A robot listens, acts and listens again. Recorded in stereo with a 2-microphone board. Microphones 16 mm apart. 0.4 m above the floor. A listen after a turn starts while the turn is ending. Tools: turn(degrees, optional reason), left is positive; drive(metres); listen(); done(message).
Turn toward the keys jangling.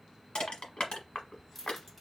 turn(degrees=30)
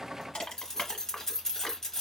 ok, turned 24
turn(degrees=140, reason="So it is at 140° left.")
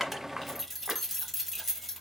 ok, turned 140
done("Found it: keys jangling, straight ahead, 1 to 2 m away.")